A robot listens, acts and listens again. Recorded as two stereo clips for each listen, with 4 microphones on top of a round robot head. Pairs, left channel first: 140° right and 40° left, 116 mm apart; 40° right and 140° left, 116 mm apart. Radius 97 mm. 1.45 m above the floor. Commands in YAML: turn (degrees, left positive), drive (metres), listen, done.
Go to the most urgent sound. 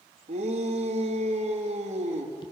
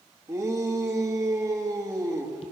turn: 70
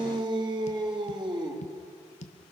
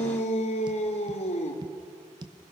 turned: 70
turn: -10
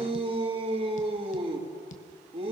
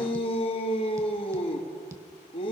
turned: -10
drive: 1.0
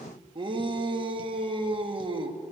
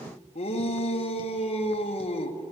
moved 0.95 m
drive: 1.0
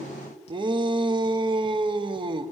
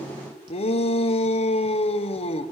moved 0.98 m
drive: 1.0
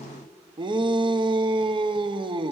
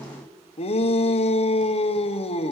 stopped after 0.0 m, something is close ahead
done: "Arrived at the shout, straight ahead."